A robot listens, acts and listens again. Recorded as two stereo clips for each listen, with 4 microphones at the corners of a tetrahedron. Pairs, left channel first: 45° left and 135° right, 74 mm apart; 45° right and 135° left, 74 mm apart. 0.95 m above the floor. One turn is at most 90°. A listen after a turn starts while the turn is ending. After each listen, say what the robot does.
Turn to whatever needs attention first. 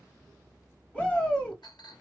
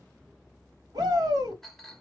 Turn 90° left.
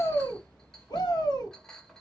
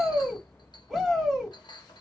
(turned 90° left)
Turn 40° left.
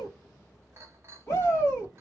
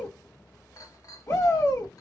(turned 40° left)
Found it: a shout, straight ahead.